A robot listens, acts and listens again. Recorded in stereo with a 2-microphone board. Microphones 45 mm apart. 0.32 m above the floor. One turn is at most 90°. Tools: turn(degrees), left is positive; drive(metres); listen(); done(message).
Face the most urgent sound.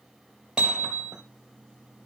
listen()
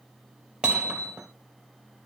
listen()
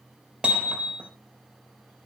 done("I can't make out anything urgent to turn to.")